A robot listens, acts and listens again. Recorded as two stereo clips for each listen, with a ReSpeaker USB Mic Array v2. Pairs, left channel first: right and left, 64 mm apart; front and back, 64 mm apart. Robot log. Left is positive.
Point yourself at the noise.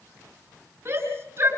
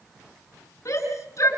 note: The shout: 45° left.
cmd yaw +45
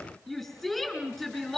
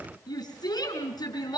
end: Facing the shout, over 4 m away.